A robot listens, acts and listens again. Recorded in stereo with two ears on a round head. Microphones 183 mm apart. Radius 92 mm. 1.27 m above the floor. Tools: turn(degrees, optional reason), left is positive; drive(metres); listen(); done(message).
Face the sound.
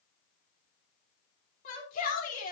turn(degrees=40, reason="The shout: about 40° left or 140° left.")
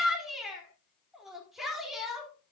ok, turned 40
done("Found it: a shout, straight ahead.")